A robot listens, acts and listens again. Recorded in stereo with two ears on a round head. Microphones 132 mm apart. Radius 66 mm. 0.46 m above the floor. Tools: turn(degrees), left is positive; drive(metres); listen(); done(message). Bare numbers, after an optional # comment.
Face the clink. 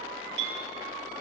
turn(-90)
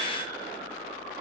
listen()
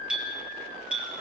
done("Facing the clink.")